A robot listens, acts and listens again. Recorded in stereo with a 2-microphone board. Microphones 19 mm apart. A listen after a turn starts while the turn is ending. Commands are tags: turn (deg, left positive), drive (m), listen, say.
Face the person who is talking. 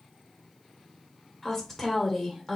<turn deg="20"/>
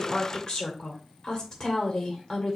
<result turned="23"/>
<turn deg="135"/>
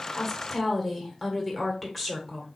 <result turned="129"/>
<say>Facing the woman speaking, 1 to 2 m away.</say>